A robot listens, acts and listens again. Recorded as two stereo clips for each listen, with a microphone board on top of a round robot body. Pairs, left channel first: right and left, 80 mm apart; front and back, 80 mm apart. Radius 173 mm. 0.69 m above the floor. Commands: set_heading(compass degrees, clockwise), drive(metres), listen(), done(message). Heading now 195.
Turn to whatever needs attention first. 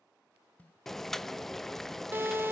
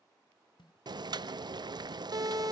set_heading(45)
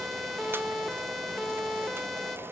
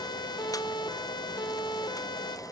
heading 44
done("Facing the siren.")